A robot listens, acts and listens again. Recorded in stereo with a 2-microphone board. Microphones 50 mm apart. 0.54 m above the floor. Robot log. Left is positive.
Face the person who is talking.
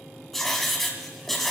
cmd idle
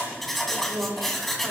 note: The woman speaking: about 65° right or 115° right.
cmd yaw -65
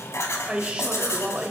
note: So it is at 25° right.
cmd yaw -25
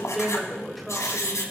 end: Found it: a woman speaking, straight ahead, 2 to 4 m away.